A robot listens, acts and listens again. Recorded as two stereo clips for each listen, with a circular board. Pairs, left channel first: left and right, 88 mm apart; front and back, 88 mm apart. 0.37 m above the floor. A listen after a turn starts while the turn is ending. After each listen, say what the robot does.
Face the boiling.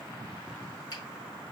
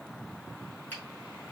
Keep listening.
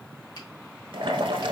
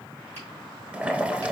Turn 105° right.
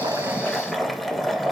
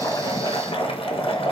Facing the boiling.